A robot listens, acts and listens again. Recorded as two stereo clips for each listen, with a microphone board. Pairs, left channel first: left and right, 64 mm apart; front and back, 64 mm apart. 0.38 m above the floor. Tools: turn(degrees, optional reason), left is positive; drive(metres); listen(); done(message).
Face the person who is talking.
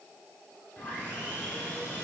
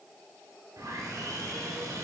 listen()
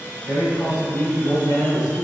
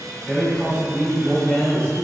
turn(degrees=65, reason="The man speaking: 65° left.")
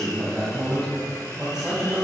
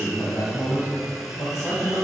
turn(degrees=-20, reason="The man speaking is now 20° right.")
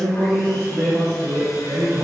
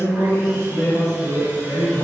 done("Facing the man speaking, 2 to 4 m away.")